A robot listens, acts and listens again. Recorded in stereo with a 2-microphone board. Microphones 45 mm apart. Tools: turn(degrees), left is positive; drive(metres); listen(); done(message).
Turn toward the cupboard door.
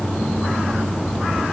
listen()
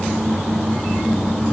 listen()
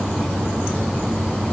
done("I can't make out a cupboard door.")